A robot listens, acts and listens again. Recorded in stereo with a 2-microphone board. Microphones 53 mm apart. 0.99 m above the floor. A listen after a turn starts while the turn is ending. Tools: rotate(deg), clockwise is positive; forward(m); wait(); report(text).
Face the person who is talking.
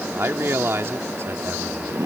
rotate(50)
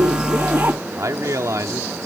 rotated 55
rotate(75)
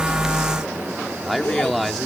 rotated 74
report("Found it: a man speaking, straight ahead.")